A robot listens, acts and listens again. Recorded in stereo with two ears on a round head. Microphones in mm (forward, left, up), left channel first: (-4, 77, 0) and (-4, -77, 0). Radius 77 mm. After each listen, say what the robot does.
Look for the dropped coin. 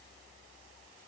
Keep listening.
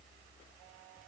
Keep listening.
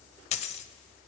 Turn 40° left.
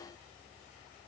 Keep listening.
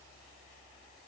I heard a dropped coin, but can't make it out now. It was about straight ahead or 100° left.